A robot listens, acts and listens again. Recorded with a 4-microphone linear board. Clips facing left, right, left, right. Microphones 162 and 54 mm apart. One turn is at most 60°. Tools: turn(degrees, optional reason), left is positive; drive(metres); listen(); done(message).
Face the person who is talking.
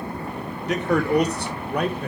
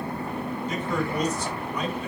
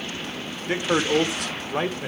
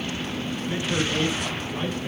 turn(degrees=60, reason="The man speaking: about 60° left or 120° left.")
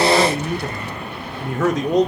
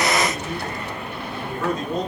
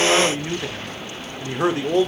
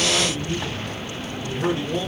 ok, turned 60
turn(degrees=60, reason="So it is at 80° left.")
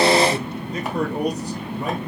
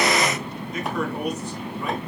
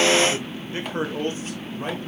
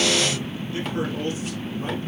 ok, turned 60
turn(degrees=35, reason="The man speaking is now 35° left.")
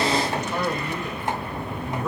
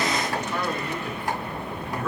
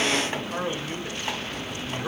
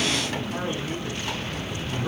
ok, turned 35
turn(degrees=20, reason="The man speaking is now 20° left.")
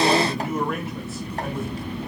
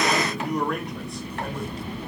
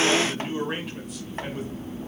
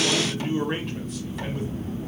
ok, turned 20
done("Found it: a man speaking, straight ahead.")